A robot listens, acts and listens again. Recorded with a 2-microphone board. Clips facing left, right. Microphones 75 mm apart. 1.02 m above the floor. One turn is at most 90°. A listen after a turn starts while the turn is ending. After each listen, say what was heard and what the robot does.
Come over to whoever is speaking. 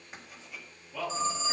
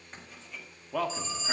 The man speaking: about 60° right or 120° right. Turn 60° right.
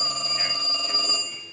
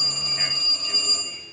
Drive 1.0 m forward.
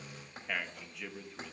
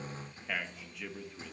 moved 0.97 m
Drive 1.0 m forward.
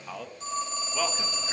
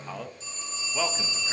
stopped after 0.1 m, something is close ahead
I am next to the man speaking.